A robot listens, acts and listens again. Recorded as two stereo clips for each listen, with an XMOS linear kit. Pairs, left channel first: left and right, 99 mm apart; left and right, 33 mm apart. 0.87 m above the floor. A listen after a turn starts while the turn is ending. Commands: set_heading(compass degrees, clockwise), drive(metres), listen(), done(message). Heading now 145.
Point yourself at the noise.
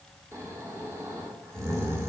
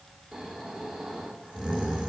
set_heading(175)
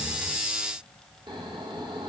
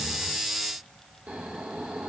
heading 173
set_heading(298)
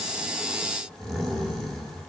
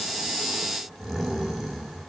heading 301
done("Facing the snoring, 2 to 4 m away.")